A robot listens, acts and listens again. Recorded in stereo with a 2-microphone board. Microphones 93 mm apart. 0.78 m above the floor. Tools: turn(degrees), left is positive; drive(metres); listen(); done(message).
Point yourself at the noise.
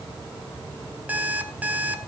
turn(degrees=-15)
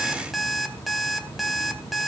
done("Facing the alarm clock.")